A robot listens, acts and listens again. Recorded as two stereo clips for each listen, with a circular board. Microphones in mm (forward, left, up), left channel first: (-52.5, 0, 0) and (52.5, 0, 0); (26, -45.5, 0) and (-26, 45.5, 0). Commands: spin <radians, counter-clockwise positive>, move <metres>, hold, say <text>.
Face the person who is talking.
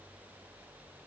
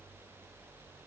hold
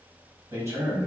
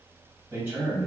spin 0.96
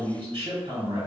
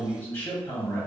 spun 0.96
say Facing the man speaking, 1 to 2 m away.